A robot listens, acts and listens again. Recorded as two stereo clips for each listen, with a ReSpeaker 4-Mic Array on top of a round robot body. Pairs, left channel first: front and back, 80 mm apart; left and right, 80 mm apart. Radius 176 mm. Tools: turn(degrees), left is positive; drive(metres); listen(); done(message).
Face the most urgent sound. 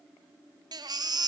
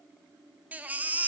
turn(degrees=-160)
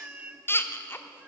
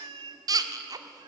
turn(degrees=-60)
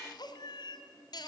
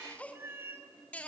listen()
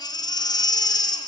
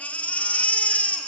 turn(degrees=20)
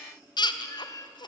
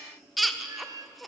done("Found it: a baby crying, straight ahead, 1 to 2 m away.")